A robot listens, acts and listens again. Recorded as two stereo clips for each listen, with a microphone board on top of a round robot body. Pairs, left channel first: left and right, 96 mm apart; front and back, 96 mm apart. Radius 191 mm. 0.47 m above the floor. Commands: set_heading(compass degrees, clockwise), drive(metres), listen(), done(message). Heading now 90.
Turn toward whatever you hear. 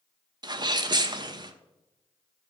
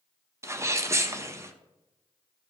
set_heading(215)
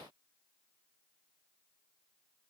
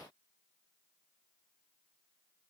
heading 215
done("Facing where the sneeze came from. I can't hear it now.")